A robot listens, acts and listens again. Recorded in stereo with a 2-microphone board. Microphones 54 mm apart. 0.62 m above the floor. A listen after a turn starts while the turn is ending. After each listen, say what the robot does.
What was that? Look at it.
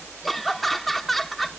Turn 30° left.
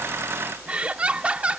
Turn 30° right.
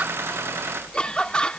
Turn 20° left.
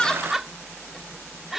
Found it: laughter, straight ahead.